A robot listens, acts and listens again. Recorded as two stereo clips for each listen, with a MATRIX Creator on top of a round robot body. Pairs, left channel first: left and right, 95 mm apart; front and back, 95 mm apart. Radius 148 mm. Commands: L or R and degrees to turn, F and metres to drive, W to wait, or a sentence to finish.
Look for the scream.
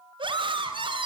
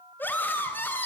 R70
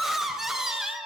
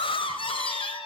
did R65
Found it: a scream, straight ahead, 2 to 4 m away.